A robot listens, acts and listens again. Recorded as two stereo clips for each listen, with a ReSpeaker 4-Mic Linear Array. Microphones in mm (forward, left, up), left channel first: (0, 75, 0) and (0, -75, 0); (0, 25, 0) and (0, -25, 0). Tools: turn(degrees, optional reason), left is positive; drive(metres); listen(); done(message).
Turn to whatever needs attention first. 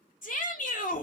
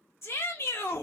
turn(degrees=65, reason="The shout: about 65° left or 115° left.")
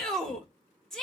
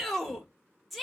done("Facing the shout, 1 to 2 m away.")